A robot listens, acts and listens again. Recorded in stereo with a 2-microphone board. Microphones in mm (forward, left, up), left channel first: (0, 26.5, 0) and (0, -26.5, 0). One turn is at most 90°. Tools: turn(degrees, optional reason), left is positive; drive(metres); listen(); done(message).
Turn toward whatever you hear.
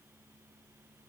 listen()
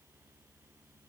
listen()
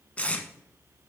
turn(degrees=25, reason="The tape being pulled: about 25° left or 155° left.")
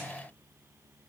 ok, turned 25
listen()
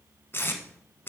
turn(degrees=90, reason="So it is at 135° left.")
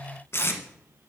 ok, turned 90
turn(degrees=55, reason="The tape being pulled is now 55° left.")
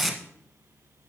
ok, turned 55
done("Found it: tape being pulled, straight ahead, 1 to 2 m away.")